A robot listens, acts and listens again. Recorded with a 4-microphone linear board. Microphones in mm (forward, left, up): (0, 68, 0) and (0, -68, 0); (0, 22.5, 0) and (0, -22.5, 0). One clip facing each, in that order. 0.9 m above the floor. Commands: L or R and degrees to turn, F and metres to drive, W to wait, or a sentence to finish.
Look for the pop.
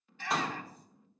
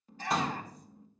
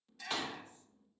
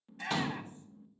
L30
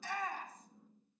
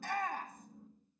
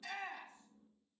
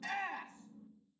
W
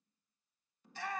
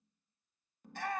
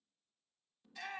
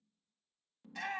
I heard a pop, but can't make it out now. It was about 30° right or 150° left.